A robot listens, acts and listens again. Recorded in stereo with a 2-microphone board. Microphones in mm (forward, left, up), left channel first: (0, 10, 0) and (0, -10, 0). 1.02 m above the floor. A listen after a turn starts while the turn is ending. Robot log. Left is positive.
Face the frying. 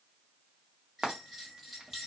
note: The frying: about 40° right or 140° right.
cmd yaw -40
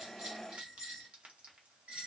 cmd idle
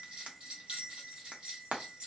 note: So it is at 100° right.
cmd yaw -100
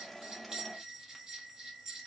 cmd idle
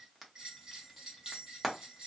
end: Found it: frying, straight ahead, under 1 m away.